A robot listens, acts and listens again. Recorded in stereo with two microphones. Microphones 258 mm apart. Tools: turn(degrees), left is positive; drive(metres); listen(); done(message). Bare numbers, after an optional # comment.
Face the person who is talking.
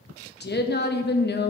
# The woman speaking: about 40° left or 140° left.
turn(40)
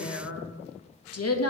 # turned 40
# So it is at 95° left.
turn(95)
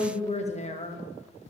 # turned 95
# The woman speaking is now 30° left.
turn(30)
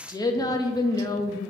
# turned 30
# The woman speaking is now 15° left.
turn(15)
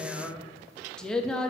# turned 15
done("Facing the woman speaking.")